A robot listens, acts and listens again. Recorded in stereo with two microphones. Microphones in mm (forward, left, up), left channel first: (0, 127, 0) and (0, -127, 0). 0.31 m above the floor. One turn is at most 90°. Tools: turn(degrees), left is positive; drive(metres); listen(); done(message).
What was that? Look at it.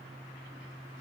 listen()
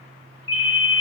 turn(degrees=25)
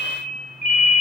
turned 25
turn(degrees=90)
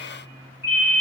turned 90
turn(degrees=60)
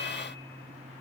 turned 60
listen()
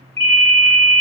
done("Found it: a ringtone, straight ahead.")